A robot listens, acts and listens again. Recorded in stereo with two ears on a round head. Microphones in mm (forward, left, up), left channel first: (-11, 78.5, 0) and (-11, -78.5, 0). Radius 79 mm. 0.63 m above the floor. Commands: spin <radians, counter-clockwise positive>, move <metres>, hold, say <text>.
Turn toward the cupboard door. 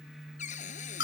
spin 0.79
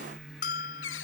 spin 1.57
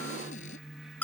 hold
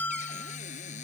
spin 0.70
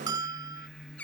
say Facing the cupboard door.